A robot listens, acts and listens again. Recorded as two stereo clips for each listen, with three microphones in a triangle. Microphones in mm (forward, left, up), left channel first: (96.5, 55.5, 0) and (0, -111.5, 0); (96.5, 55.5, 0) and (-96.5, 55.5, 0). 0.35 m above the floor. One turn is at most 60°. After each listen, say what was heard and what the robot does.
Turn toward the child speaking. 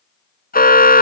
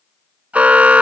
Keep listening.
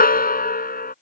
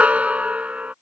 Keep listening.
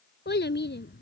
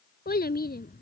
The child speaking: 35° left. Turn 35° left.
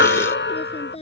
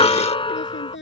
Found it: a child speaking, straight ahead.